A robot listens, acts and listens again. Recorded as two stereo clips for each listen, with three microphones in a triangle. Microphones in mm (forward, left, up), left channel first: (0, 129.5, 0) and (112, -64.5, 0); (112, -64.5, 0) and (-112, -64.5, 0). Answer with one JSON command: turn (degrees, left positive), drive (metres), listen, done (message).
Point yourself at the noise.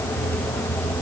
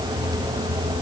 {"listen": true}
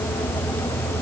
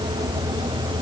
{"listen": true}
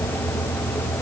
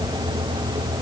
{"done": "I can't make out anything to turn to."}